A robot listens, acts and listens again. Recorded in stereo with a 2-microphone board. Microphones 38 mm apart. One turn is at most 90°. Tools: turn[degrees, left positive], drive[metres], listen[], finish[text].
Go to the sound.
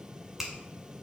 Action: turn[-30]
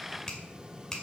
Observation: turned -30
Thought: So it is at 15° left.
Action: turn[15]
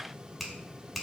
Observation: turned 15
Action: drive[1.0]
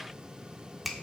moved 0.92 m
Action: drive[1.0]
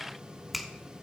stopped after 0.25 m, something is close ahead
Action: finish[Arrived at the finger snap, straight ahead.]